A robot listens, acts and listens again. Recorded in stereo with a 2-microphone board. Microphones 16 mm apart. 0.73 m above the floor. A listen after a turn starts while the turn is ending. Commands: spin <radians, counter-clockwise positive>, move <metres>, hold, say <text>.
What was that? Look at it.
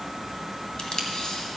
spin 1.05
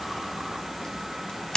spin 0.96
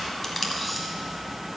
hold
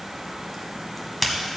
say Facing the tape being pulled, 1 to 2 m away.